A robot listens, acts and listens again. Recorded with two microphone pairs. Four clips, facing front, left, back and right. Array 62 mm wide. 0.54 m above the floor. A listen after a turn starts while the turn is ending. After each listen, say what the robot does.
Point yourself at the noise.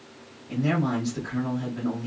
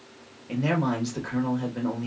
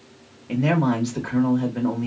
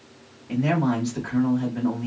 Turn 160° left.
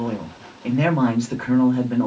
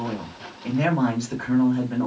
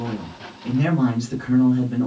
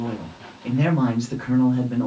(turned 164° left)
Found it: a man speaking, straight ahead.